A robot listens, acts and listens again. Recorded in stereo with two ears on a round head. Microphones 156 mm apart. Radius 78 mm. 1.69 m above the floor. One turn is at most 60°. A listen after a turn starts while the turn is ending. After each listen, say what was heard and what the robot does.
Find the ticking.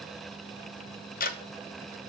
The ticking: about 55° left or 125° left. Turn 55° left.
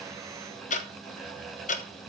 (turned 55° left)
So it is at 55° left. Turn 55° left.
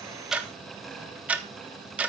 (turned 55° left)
The ticking is now 10° right. Turn 10° right.
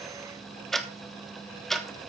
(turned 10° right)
Facing the ticking.